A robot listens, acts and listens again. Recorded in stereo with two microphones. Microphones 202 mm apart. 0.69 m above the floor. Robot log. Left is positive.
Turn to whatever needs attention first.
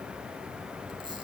cmd idle
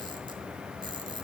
cmd idle
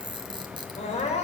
note: The crying: about 35° left or 145° left.
cmd yaw +35
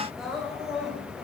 end: Found it: crying, straight ahead.